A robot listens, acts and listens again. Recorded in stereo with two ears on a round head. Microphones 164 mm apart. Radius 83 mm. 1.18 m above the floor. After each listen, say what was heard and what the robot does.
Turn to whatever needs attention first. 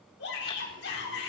The shout: about 60° left or 120° left. Turn 60° left.
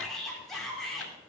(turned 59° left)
Found it: a shout, straight ahead.